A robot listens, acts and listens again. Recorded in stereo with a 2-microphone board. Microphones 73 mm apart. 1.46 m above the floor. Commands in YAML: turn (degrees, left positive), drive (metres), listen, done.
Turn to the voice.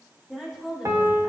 turn: -30
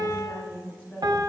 turn: 25
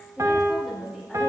done: "Found it: a woman speaking, straight ahead, 2 to 4 m away."